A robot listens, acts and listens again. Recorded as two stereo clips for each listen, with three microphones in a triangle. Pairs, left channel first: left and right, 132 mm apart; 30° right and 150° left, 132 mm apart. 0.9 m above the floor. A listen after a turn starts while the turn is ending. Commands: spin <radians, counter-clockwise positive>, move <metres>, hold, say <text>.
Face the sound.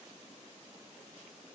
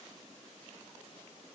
hold
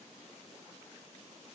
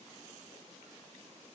hold
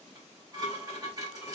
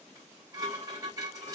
spin -2.62
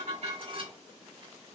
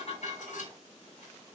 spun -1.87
spin -0.70
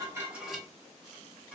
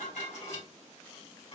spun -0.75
say Facing the dishes clattering.